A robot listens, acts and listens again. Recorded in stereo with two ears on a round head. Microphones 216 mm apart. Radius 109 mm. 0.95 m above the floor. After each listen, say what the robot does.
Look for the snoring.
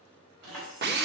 Keep listening.
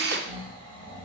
Turn 55° right.
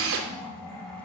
Facing the snoring.